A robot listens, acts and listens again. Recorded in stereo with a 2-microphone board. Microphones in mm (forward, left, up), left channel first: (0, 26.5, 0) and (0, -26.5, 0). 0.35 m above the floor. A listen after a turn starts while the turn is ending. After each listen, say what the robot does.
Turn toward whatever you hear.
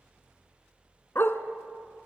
Turn 55° left.
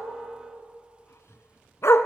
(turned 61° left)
Turn 65° left.
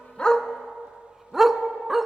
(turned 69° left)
Found it: a dog barking, straight ahead.